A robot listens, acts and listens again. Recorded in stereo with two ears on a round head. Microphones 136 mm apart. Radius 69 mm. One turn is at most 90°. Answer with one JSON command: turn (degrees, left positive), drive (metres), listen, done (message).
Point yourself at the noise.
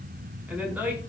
{"turn": -30}
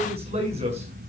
{"turn": -90}
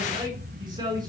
{"turn": -25}
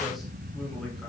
{"listen": true}
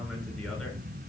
{"listen": true}
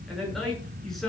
{"done": "Facing the man speaking."}